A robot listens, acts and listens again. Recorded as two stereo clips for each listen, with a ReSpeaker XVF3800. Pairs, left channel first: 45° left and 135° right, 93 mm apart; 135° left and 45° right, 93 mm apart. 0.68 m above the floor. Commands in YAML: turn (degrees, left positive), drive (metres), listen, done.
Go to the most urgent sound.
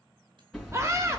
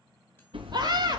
turn: -80
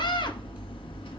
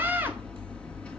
turn: 20
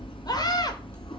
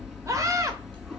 drive: 1.0
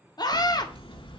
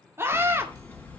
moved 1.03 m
turn: 15
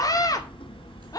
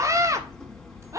drive: 1.0
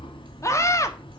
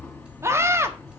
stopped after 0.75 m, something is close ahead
done: "Arrived at the scream, straight ahead."